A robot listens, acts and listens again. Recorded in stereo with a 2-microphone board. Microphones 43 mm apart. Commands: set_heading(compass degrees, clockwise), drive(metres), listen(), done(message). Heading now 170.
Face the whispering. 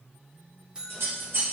listen()
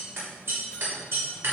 listen()
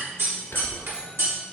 set_heading(110)
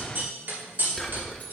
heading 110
done("Facing the whispering.")